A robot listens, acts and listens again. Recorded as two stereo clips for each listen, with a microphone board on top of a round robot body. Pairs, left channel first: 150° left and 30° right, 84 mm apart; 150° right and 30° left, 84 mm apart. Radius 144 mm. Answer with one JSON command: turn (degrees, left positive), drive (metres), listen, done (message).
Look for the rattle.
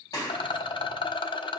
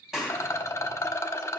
{"turn": 155}
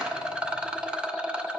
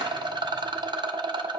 {"turn": 50}
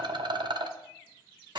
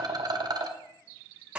{"done": "Found it: a rattle, straight ahead, under 1 m away."}